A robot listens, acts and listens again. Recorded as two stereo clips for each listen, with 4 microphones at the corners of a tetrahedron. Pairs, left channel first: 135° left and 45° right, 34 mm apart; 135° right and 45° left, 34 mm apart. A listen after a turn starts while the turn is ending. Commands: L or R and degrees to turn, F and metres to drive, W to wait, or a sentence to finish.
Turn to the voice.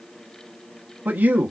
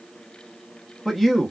R40
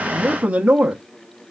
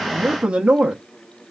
Facing the man speaking.